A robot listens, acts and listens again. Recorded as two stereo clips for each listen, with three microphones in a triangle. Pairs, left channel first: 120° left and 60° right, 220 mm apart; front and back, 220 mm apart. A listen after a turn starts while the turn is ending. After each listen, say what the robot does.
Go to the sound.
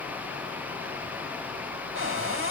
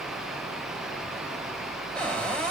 Turn 85° right.
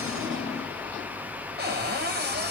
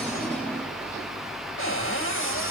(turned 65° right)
Turn 20° right.
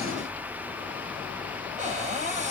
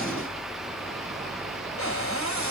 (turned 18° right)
Drive 1.0 m forward.
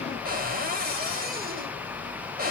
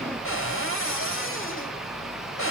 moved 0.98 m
Turn 15° right.
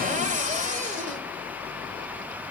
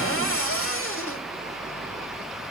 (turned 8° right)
Turn 10° right.
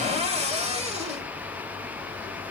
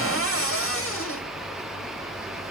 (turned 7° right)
Drive 1.0 m forward.
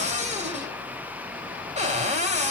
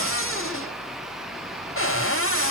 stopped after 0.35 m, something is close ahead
I am next to the cupboard door.